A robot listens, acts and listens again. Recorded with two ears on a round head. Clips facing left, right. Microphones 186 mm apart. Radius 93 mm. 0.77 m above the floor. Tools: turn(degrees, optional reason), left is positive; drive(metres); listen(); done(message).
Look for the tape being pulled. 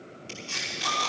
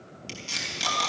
turn(degrees=-50, reason="The tape being pulled: about 50° right or 130° right.")
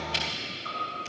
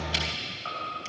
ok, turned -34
listen()
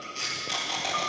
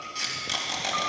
turn(degrees=-20, reason="So it is at 20° right.")
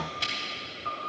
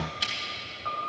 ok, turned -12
done("Found it: tape being pulled, straight ahead.")